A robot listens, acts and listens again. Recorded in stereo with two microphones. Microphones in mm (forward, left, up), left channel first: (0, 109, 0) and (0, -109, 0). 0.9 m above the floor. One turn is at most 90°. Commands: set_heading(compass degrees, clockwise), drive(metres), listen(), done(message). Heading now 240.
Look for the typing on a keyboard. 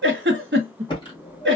set_heading(215)
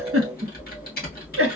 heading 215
set_heading(125)
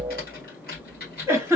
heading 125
set_heading(80)
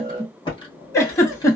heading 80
set_heading(60)
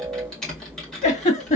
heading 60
done("Found it: typing on a keyboard, straight ahead.")